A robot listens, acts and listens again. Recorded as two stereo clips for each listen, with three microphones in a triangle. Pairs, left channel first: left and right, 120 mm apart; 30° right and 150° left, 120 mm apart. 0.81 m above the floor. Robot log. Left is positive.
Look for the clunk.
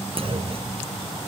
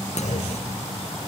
note: The clunk: 50° right.
cmd yaw -50
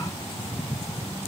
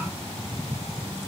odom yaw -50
end: I heard a clunk from this way, but can't make it out now.